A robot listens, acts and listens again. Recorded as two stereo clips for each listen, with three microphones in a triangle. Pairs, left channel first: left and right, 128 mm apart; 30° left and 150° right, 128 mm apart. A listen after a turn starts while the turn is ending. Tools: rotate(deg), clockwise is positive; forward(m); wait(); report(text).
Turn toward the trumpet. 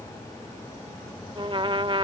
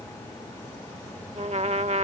rotate(135)
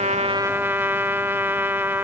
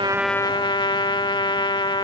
rotate(20)
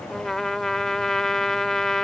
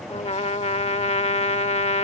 report("Found it: a trumpet, straight ahead.")